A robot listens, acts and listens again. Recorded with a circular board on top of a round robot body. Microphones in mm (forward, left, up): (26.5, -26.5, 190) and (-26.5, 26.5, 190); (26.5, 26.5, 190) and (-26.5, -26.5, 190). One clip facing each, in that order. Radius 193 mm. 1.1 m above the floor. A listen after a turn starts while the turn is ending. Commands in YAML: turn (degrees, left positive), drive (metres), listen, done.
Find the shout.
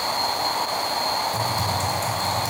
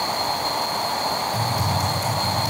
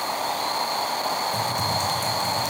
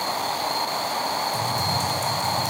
listen: true
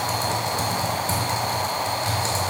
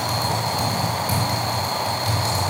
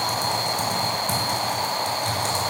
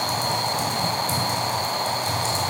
listen: true
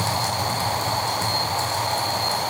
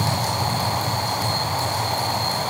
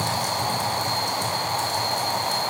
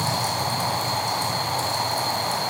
done: "I can't make out a shout, only typing on a keyboard."